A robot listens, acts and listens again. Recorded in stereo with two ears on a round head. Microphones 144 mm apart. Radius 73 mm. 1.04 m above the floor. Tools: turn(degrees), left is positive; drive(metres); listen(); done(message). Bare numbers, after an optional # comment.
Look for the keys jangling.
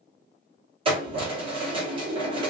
# The keys jangling: about 35° right or 145° right.
turn(-35)
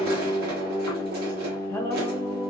# So it is at 110° right.
turn(-110)
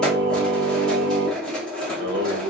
done("Facing the keys jangling, 1 to 2 m away.")